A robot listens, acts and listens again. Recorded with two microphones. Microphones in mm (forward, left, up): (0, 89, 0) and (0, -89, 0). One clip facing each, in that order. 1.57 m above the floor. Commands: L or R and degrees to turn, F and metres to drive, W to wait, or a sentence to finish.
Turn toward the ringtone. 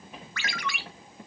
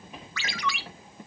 L55
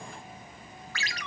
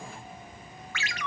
L45
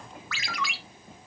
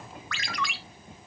Facing the ringtone.